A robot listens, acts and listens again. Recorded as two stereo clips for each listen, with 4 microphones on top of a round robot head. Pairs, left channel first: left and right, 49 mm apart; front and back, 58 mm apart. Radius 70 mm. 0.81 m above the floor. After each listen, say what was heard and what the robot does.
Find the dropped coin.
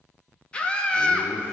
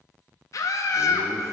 Keep listening.
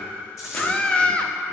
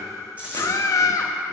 The dropped coin: 110° left. Turn 110° left.
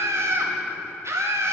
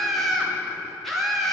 Facing where the dropped coin came from. I can't hear it now.